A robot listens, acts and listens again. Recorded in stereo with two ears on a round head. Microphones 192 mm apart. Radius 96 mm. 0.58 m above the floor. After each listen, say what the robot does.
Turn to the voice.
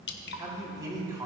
Turn 15° right.
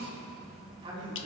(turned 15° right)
Turn 25° right.
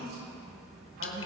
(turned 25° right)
Turn 135° right.
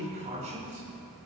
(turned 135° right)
Turn 35° right.
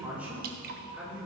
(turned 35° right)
Turn 10° right.
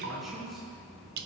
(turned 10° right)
Facing the man speaking.